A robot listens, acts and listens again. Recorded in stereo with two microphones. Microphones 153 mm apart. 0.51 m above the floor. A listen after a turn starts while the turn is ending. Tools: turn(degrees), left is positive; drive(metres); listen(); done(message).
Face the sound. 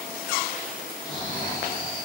turn(degrees=30)
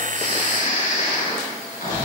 turn(degrees=120)
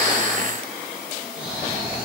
done("Found it: snoring, straight ahead, 2 to 4 m away.")